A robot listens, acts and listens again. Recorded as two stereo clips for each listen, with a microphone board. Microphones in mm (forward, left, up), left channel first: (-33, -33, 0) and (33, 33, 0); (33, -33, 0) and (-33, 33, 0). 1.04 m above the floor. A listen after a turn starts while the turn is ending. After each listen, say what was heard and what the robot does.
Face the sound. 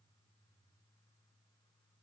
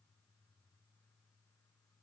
Keep listening.
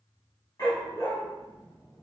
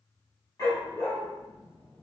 The dog barking: 95° right. Turn 95° right.
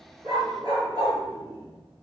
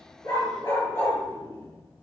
Facing the dog barking.